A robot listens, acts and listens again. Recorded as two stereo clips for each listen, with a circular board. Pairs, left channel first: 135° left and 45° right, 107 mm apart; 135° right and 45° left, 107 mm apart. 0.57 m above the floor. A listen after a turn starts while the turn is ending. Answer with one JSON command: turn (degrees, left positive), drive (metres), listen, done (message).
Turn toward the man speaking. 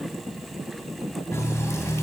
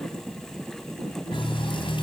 {"listen": true}
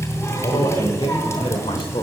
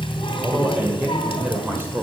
{"turn": 110}
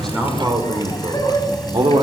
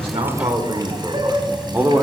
{"turn": -20}
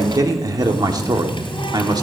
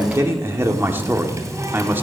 {"turn": -15}
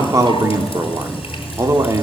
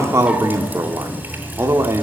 {"done": "Facing the man speaking, 1 to 2 m away."}